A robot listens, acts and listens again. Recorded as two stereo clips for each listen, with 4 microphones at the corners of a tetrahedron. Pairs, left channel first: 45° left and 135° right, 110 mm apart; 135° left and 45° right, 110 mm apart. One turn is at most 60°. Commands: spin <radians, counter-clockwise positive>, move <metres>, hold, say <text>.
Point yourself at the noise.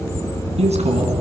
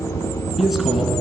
spin -1.05
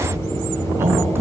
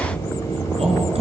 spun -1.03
spin -1.05
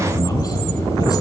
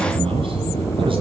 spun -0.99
say Facing the man speaking, over 4 m away.